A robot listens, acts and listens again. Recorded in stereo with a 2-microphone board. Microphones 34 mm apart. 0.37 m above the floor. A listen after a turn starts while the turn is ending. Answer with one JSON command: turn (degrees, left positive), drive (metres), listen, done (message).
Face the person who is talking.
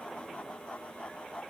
{"listen": true}
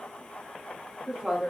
{"turn": -30}
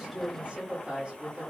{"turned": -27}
{"turn": -135}
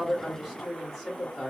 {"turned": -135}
{"done": "Facing the woman speaking."}